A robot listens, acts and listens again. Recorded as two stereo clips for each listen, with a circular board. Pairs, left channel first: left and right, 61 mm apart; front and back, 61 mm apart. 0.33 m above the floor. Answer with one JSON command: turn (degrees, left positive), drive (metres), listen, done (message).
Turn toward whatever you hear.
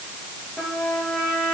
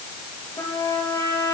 {"done": "Found it: a trumpet, straight ahead, over 4 m away."}